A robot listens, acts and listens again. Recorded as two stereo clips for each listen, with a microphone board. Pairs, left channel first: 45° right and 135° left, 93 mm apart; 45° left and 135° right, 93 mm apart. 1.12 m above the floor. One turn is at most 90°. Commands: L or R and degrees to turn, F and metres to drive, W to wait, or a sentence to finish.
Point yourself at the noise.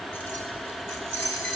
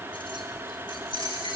L10
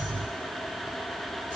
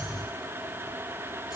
W
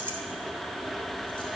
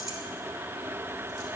W
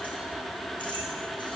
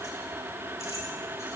I heard keys jangling from this way, but can't make it out now.